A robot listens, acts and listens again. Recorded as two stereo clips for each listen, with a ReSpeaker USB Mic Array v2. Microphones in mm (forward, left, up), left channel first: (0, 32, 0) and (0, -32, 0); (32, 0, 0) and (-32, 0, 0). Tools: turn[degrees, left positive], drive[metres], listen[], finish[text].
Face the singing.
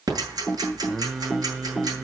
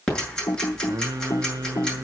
Thought: The singing: 170° right.
Action: turn[-170]
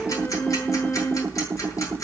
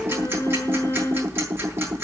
Thought: The singing is now 35° left.
Action: turn[35]
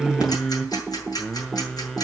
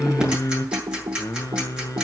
Thought: The singing is now 10° left.
Action: turn[10]
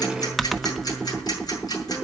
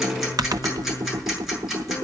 Action: listen[]
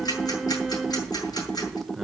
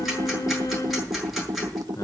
Action: finish[Facing the singing, 1 to 2 m away.]